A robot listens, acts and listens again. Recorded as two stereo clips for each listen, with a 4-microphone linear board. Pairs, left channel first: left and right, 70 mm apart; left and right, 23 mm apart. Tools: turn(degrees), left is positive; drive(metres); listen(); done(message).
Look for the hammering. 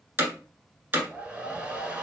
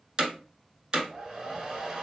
turn(degrees=-30)
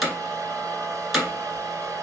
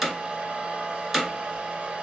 done("Facing the hammering, 1 to 2 m away.")